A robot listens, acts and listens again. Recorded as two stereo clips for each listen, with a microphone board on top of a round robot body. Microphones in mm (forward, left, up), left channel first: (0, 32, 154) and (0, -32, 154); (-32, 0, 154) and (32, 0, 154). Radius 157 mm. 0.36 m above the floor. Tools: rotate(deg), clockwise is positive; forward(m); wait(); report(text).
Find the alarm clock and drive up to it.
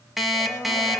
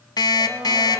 rotate(-180)
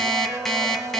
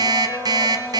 forward(1.0)
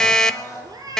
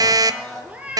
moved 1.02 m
rotate(-10)
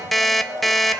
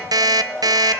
forward(1.0)
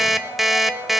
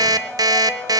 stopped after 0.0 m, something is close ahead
report("I am next to the alarm clock.")